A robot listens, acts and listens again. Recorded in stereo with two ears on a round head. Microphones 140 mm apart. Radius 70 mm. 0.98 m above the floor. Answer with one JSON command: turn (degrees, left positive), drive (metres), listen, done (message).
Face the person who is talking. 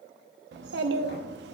{"turn": -90}
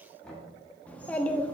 {"turn": 10}
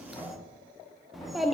{"done": "Found it: a child speaking, straight ahead, under 1 m away."}